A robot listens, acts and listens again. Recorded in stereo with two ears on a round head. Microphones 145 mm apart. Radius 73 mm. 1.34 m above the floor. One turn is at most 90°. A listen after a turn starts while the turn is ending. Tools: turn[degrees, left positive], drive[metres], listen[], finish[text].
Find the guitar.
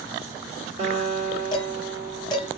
Thought: The guitar: about 35° right or 145° right.
Action: turn[-35]
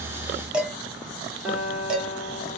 Action: finish[Found it: a guitar, straight ahead.]